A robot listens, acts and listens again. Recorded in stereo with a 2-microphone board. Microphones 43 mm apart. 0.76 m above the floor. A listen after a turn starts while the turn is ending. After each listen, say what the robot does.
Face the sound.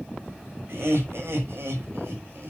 Turn 70° right.
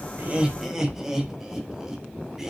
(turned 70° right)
Turn 10° right.
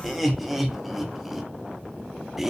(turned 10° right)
Found it: laughter, straight ahead, 1 to 2 m away.